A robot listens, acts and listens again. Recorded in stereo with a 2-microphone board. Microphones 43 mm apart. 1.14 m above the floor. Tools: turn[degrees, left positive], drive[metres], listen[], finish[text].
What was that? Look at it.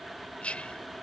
Thought: The whispering: about 30° left or 150° left.
Action: turn[30]
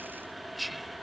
Action: finish[Facing the whispering.]